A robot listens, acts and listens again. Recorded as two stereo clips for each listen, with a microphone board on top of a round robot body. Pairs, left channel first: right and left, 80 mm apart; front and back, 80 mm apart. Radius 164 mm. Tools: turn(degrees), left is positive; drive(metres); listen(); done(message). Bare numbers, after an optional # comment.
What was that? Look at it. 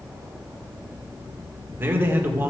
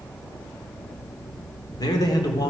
# The man speaking: 30° left.
turn(30)
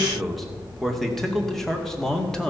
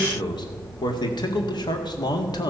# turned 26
# The man speaking is now 10° right.
turn(-10)
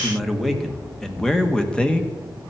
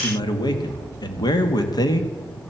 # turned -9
# The man speaking is now 15° right.
turn(-15)
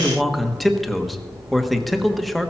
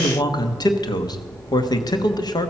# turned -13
done("Facing the man speaking.")